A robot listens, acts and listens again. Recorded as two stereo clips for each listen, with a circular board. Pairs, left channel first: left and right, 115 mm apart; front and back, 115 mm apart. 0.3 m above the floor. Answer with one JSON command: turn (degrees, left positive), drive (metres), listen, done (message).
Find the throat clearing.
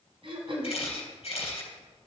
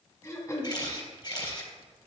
{"turn": -60}
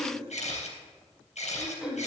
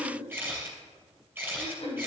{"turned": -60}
{"done": "Found it: throat clearing, straight ahead."}